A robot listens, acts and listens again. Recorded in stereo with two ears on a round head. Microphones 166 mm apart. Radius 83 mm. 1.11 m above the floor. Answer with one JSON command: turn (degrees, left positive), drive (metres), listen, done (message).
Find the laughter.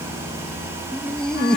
{"turn": 30}
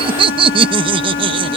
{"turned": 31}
{"turn": -30}
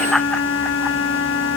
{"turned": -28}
{"done": "Facing the laughter."}